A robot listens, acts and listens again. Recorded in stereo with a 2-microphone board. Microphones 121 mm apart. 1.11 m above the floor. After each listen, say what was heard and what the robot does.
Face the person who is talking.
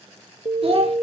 The child speaking: about 50° right or 130° right. Turn 50° right.
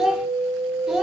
Facing the child speaking.